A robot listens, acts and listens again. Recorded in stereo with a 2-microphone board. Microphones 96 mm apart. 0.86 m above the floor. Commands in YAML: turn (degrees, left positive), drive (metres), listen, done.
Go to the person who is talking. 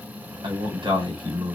turn: -55
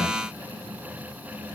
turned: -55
listen: true
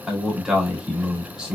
drive: 1.0
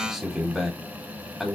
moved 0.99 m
drive: 1.0
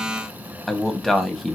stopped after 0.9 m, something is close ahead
done: "Arrived at the man speaking, straight ahead."